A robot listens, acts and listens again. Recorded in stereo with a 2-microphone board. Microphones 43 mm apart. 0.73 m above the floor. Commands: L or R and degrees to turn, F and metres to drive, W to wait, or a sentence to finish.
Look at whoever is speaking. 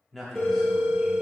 L30
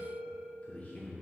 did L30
L145
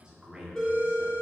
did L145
R20
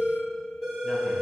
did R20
W
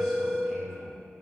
W
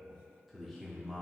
Found it: a man speaking, straight ahead, 1 to 2 m away.